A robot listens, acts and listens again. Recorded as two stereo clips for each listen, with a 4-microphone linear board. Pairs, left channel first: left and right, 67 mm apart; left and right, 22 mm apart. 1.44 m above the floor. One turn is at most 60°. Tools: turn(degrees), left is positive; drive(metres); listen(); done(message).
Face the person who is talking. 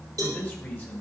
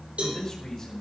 turn(degrees=30)
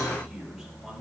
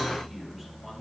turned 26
listen()
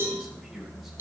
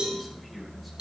listen()
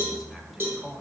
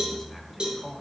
done("Facing the man speaking.")